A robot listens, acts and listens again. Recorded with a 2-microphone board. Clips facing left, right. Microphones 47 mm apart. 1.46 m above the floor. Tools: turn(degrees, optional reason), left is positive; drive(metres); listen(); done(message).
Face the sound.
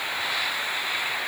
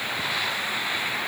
listen()
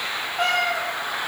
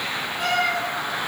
turn(degrees=50, reason="The cat meowing: about 50° left or 130° left.")
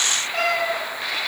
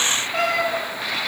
done("Facing the cat meowing, 2 to 4 m away.")